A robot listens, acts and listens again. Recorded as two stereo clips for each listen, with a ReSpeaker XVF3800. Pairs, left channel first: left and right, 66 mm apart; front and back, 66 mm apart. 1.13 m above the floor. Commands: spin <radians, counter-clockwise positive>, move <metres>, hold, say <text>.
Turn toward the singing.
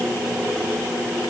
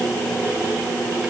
hold
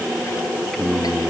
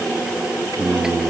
spin 3.05
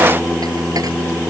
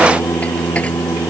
spin 0.26
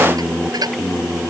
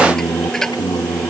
say Found it: singing, straight ahead.